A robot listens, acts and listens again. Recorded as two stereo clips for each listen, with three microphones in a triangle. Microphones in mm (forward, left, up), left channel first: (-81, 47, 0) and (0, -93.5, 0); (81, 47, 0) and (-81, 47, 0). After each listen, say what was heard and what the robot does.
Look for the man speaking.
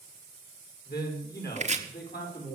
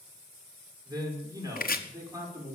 The man speaking: 105° left. Turn 105° left.
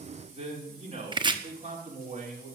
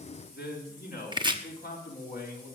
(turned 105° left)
The man speaking is now 20° right. Turn 20° right.
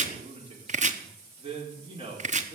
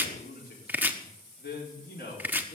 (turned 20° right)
Found it: a man speaking, straight ahead.